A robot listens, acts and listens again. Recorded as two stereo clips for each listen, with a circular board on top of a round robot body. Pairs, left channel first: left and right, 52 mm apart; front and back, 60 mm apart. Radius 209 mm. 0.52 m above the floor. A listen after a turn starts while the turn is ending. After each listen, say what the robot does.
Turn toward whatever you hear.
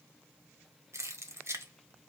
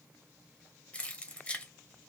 Turn 70° right.
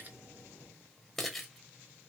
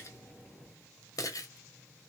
Found it: keys jangling, straight ahead.